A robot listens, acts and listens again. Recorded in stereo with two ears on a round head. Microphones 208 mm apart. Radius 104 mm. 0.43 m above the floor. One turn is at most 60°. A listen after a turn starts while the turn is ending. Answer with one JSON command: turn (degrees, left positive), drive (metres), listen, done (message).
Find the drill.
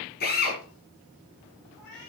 {"turn": 40}
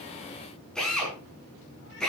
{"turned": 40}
{"done": "Found it: a drill, straight ahead, over 4 m away."}